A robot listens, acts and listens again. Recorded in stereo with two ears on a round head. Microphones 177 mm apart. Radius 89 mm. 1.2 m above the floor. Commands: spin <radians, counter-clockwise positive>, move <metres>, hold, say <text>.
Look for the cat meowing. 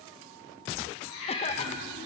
spin 1.57
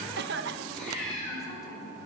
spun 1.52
say Found it: a cat meowing, straight ahead.